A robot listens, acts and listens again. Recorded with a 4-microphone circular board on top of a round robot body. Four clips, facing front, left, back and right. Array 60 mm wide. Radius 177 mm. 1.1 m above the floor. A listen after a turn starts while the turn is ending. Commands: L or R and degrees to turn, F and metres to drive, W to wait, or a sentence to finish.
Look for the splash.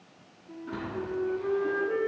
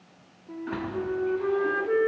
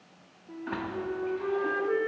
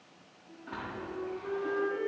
L150
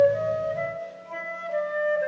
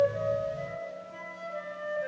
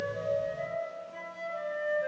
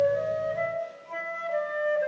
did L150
Facing where the splash came from. I can't hear it now.